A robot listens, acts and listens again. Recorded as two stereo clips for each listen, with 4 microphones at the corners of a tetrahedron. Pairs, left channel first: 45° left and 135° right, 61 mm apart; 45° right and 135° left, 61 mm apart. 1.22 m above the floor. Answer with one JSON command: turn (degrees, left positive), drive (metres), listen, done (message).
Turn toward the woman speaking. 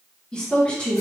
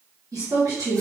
{"turn": 115}
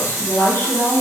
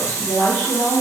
{"done": "Found it: a woman speaking, straight ahead."}